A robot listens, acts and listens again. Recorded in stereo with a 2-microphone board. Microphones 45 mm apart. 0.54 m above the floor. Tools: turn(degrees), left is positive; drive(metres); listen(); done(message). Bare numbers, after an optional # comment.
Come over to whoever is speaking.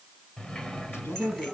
# The man speaking: about 65° left or 115° left.
turn(65)
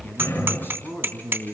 # So it is at 50° left.
turn(50)
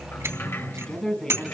# The man speaking is now 15° left.
turn(15)
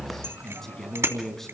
drive(1.0)
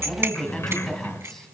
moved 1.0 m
# The man speaking is now 10° left.
turn(10)
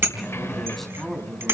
drive(1.0)
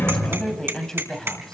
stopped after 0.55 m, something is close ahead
# The man speaking is now 10° left.
turn(10)
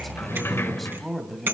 done("Something is in my way. I am facing the man speaking but have not reached it.")